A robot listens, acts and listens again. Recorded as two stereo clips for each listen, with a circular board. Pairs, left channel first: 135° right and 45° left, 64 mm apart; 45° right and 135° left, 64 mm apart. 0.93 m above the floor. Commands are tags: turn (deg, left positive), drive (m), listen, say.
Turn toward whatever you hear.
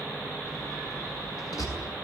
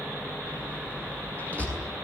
<turn deg="-115"/>
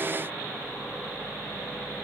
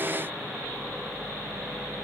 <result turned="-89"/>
<turn deg="-25"/>
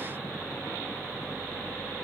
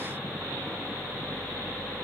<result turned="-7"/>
<turn deg="-20"/>
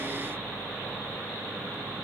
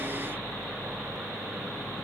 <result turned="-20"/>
<say>Facing where the door slam came from. I can't hear it now.</say>